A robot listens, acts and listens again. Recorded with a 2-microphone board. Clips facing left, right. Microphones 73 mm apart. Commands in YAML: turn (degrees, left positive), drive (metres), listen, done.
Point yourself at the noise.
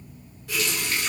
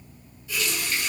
turn: 75
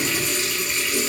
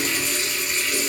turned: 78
done: "Found it: a running tap, straight ahead, under 1 m away."